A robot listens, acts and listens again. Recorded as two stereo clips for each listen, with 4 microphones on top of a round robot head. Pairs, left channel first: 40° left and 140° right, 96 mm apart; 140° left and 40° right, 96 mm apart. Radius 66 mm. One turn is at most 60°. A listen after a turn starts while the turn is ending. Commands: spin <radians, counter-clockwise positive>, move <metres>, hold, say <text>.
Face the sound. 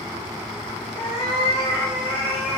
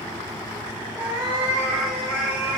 spin -1.05
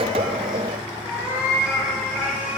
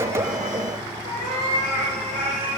spin -1.05
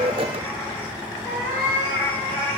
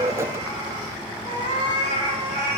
spin -0.61
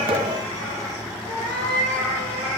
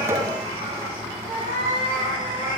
spin -0.17
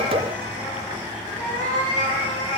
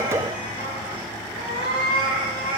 say Found it: a cat meowing, straight ahead, 2 to 4 m away.